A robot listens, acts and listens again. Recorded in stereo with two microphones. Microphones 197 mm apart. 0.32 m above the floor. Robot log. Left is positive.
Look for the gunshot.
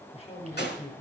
note: The gunshot: about 60° left or 120° left.
cmd yaw +60
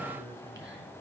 cmd idle
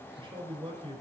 end: I heard a gunshot, but can't make it out now. It was about straight ahead or 60° left.